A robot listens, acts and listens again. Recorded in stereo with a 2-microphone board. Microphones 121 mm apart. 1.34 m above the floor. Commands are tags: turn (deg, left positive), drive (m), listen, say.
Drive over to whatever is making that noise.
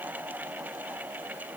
<listen/>
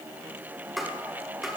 <turn deg="30"/>
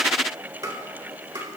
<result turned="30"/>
<turn deg="-30"/>
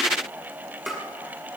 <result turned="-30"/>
<drive m="1.0"/>
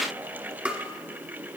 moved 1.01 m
<turn deg="-10"/>
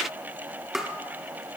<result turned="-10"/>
<drive m="1.0"/>
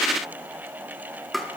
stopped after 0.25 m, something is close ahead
<say>Arrived at the tapping, straight ahead.</say>